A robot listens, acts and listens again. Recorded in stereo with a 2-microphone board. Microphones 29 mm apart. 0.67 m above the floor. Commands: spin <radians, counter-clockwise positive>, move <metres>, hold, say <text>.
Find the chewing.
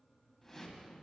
hold
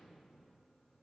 hold
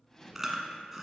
spin -0.52
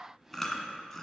spin 0.26
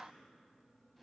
hold
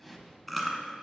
say Found it: chewing, straight ahead.